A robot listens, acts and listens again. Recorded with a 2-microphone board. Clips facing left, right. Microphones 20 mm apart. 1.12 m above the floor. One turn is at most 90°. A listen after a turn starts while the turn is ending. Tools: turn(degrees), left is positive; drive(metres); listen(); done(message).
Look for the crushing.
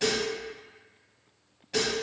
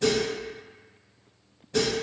listen()
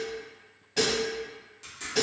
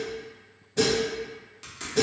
turn(degrees=-25)
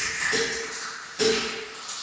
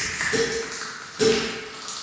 turn(degrees=-90)
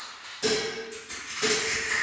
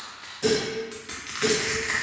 turn(degrees=-85)
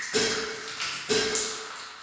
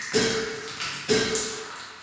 done("Facing the crushing, under 1 m away.")